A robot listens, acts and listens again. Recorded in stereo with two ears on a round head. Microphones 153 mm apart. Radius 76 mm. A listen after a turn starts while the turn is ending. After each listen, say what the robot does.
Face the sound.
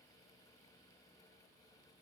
Keep listening.
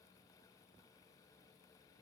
Keep listening.
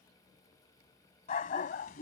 Turn 55° left.
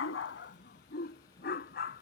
Turn 60° left.
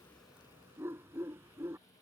Turn 15° right.
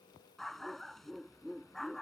Found it: a dog barking, straight ahead.